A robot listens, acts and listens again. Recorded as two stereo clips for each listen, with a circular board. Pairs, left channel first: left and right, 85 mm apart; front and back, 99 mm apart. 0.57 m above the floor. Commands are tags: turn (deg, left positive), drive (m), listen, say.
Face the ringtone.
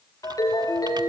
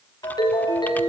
<turn deg="45"/>
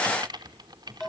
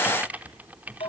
<say>Facing the ringtone, over 4 m away.</say>